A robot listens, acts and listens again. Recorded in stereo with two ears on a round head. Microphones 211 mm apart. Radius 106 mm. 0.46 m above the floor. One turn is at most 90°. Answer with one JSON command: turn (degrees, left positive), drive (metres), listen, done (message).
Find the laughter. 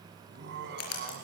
{"turn": -55}
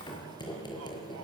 {"listen": true}
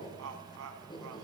{"turn": -70}
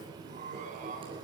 {"turn": -35}
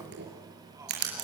{"listen": true}
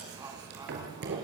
{"listen": true}
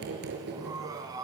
{"turn": -15}
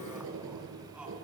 {"listen": true}
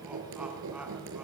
{"listen": true}
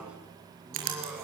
{"done": "Found it: laughter, straight ahead, over 4 m away."}